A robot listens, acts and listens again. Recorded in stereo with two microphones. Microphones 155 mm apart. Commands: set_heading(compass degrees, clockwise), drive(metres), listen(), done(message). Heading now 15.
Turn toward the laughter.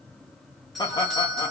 set_heading(350)
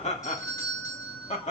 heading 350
set_heading(215)
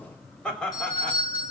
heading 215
set_heading(205)
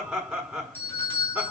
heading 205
done("Facing the laughter, over 4 m away.")